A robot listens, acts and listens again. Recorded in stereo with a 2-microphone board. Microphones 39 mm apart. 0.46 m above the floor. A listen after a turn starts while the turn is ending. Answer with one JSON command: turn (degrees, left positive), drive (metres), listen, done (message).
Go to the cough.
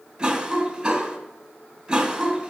{"turn": -15}
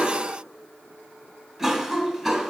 {"drive": 1.0}
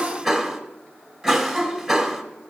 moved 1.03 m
{"drive": 1.0}
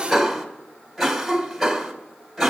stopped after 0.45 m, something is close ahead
{"done": "I am next to the cough."}